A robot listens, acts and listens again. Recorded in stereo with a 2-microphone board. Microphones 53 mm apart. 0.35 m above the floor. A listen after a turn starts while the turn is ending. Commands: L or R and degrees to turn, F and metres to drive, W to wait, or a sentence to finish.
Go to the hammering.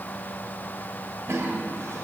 W
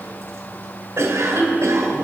W
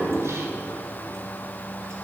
I can't make out hammering to turn to.